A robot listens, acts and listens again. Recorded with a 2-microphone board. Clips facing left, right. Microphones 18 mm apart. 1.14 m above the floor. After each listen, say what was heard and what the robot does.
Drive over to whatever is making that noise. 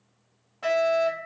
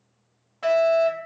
The fire alarm: about 20° right or 160° right. Turn 20° right.
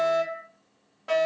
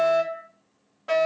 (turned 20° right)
Drive 1.0 m forward.
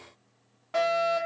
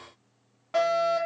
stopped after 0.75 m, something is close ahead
The fire alarm is now 10° right. Turn 10° right.
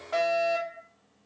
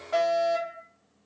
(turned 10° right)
I am next to the fire alarm.